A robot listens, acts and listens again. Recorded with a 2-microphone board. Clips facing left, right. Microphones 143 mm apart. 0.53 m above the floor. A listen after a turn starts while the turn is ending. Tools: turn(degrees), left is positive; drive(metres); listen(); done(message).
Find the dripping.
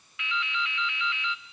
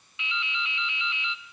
turn(degrees=-20)
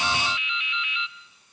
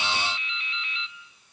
turn(degrees=-135)
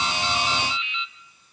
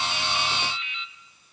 turn(degrees=-65)
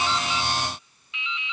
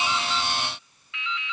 turn(degrees=25)
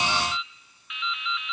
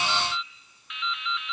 done("Found it: dripping, straight ahead, 1 to 2 m away.")